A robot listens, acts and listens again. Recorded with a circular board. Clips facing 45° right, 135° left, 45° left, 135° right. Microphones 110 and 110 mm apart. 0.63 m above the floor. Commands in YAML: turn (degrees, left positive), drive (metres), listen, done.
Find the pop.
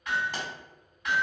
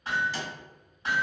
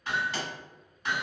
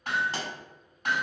turn: -85
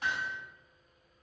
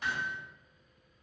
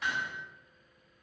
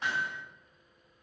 done: "I heard a pop from this way, but can't make it out now."